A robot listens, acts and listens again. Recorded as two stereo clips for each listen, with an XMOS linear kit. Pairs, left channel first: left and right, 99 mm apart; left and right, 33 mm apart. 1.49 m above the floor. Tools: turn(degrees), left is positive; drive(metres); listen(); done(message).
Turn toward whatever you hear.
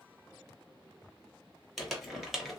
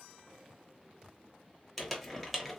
turn(degrees=30)
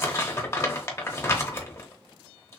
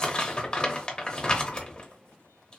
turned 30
turn(degrees=150)
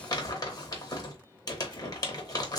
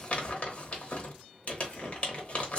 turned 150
turn(degrees=40)
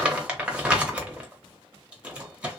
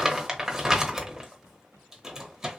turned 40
turn(degrees=-15)
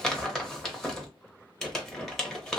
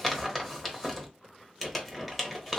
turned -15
done("Facing the crumpling, under 1 m away.")